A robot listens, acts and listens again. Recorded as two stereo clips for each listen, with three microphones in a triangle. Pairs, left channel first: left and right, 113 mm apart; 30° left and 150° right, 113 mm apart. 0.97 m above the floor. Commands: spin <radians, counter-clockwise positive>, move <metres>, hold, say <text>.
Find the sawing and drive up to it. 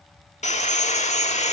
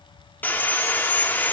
spin 1.83
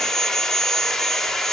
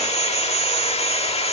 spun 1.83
move 1.0
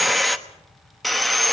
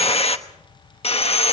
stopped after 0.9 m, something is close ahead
say I am next to the sawing.